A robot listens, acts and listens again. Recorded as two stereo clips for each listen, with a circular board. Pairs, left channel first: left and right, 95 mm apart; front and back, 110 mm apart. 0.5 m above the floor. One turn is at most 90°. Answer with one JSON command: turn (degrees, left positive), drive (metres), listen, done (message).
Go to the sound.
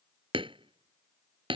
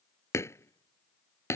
{"turn": -65}
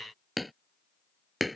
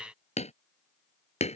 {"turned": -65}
{"drive": 1.0}
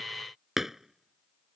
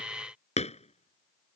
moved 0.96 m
{"drive": 1.0}
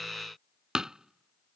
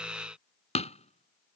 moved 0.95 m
{"drive": 1.0}
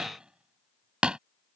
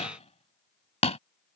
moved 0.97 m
{"turn": -10}
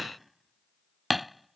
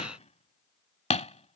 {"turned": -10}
{"drive": 1.0}
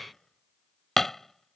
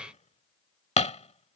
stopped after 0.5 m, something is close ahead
{"done": "Arrived at the hammering, straight ahead."}